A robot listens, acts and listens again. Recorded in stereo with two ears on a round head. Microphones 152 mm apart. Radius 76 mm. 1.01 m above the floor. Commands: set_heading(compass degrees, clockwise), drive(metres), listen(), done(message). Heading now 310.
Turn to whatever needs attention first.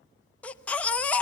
set_heading(280)
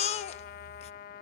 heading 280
set_heading(135)
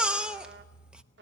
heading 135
done("Facing the baby crying.")